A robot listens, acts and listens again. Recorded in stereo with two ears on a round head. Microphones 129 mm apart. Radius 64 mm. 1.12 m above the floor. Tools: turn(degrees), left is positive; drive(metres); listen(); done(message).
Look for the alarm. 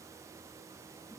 listen()
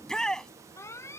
turn(degrees=20)
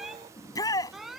done("Found it: an alarm, straight ahead.")